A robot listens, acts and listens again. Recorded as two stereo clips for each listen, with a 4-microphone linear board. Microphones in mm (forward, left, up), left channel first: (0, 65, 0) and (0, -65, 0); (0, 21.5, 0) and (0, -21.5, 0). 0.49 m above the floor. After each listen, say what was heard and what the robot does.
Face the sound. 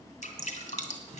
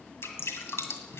The dripping: about 60° left or 120° left. Turn 60° left.
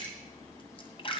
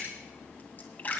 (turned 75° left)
So it is at 40° left. Turn 40° left.
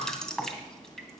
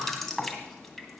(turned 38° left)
Facing the dripping.